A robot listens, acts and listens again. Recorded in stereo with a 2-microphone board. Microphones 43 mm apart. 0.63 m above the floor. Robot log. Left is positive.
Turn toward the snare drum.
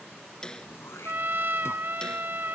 note: The snare drum: about 20° left or 160° left.
cmd yaw +20
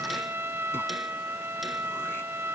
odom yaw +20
cmd idle
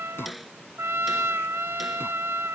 end: Facing the snare drum.